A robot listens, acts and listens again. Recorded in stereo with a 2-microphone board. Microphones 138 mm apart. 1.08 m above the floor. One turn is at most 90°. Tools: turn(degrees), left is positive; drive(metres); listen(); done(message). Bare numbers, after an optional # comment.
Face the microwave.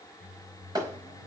# The microwave: about 75° right or 105° right.
turn(-75)
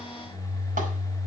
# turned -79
# So it is at 30° right.
turn(-30)
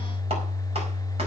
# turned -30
done("Found it: a microwave, straight ahead, over 4 m away.")